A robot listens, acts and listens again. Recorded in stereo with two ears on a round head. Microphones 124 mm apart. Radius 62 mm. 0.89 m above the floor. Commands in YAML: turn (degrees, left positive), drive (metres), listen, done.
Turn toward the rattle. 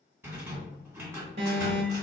turn: -15
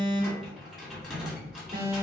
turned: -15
done: "Found it: a rattle, straight ahead."